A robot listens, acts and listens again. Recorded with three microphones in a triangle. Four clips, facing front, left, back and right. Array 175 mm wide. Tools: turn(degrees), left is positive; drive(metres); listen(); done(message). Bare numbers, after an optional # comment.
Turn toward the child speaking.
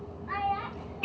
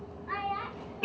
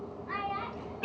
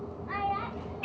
# The child speaking: 65° left.
turn(65)
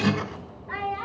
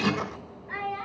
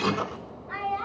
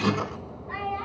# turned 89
done("Facing the child speaking, 2 to 4 m away.")